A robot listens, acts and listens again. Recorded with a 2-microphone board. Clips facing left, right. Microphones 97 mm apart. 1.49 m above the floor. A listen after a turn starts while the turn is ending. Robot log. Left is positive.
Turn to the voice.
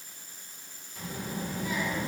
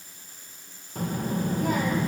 note: The child speaking: about 50° right or 130° right.
cmd yaw -50
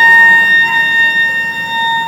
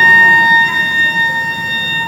cmd idle
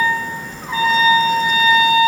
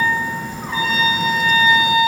end: Found it: a child speaking, straight ahead.